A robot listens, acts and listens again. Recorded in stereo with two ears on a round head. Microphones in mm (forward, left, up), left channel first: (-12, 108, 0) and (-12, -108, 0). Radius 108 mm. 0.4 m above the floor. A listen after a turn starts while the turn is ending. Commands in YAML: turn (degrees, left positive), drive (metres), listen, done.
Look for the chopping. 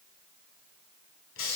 listen: true
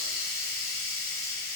listen: true
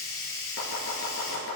turn: 65
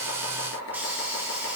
turn: 55
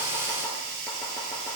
listen: true
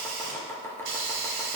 turn: 10
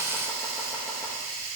listen: true
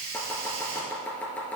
done: "Found it: chopping, straight ahead."